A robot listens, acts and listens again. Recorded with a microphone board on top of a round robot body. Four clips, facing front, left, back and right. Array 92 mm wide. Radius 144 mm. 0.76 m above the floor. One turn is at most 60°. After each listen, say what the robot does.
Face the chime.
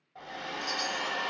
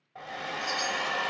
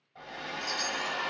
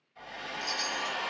Turn 60° left.
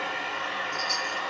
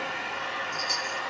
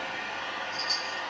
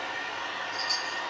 Turn 60° left.
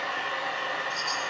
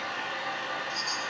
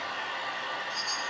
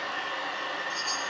Turn 30° left.
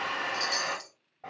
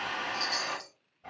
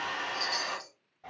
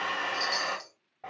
Found it: a chime, straight ahead.